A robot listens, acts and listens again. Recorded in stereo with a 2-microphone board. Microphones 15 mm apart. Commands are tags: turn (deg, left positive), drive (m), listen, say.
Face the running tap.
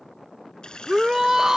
<turn deg="90"/>
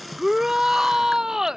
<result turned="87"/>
<turn deg="-10"/>
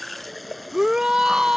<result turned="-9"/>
<say>Facing the running tap.</say>